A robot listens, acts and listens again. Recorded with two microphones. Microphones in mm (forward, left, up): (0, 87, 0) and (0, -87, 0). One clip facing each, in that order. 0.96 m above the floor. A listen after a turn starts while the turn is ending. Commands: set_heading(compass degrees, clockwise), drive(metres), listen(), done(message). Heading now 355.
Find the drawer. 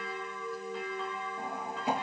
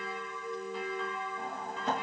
set_heading(325)
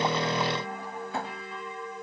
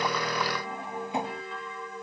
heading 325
set_heading(345)
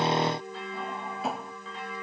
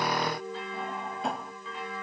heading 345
done("Facing the drawer.")